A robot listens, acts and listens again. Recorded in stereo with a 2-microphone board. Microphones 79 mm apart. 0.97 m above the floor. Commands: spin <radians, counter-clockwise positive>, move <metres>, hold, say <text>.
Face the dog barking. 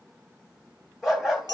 spin -0.52
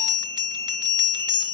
hold
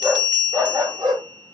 spin -2.09
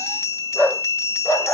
spin 0.44
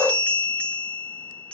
say Found it: a dog barking, straight ahead, 2 to 4 m away.